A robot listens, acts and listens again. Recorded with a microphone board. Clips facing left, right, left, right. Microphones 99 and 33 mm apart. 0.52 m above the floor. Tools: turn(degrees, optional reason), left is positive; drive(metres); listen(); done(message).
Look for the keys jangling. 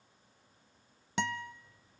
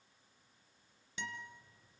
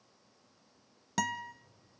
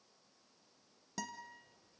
turn(degrees=-25, reason="The keys jangling: about 25° right or 155° right.")
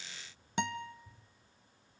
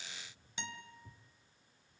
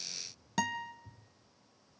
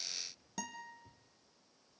turn(degrees=-135, reason="So it is at 135° right.")
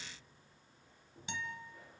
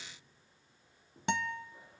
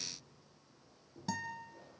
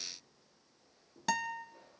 turn(degrees=-20, reason="The keys jangling is now 20° right.")
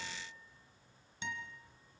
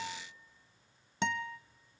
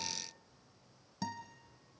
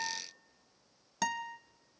done("Facing the keys jangling.")